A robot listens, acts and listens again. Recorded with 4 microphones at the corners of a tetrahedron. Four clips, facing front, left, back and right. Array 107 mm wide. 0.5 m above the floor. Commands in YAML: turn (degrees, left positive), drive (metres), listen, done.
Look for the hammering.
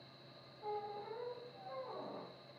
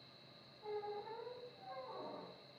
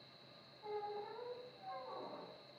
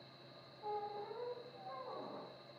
listen: true
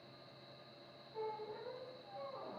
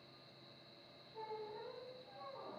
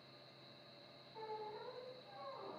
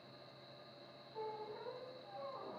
listen: true
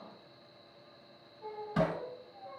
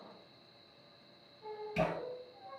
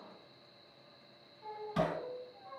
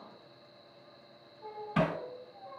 turn: -75
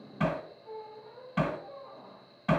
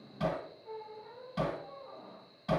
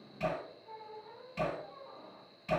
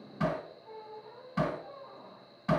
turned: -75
turn: -15
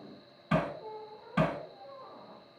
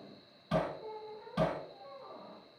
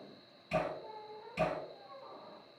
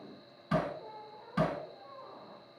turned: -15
turn: -10
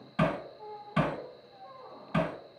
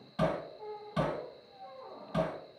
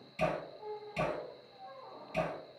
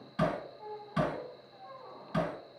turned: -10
done: "Facing the hammering."